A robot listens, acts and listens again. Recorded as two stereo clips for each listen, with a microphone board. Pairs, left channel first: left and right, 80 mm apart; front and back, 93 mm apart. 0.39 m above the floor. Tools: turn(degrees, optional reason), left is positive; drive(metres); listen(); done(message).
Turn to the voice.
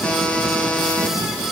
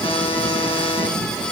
listen()
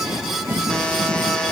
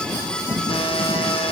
listen()
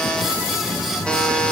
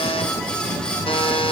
done("I can't make out anyone speaking to turn to.")